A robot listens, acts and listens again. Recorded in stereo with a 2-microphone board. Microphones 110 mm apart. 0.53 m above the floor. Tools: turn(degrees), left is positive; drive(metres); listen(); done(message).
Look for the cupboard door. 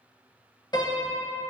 listen()
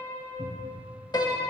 turn(degrees=30)
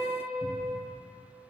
listen()
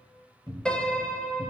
turn(degrees=140)
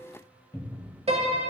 turn(degrees=25)
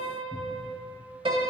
listen()
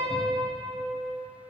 listen()
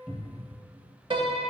done("Facing the cupboard door.")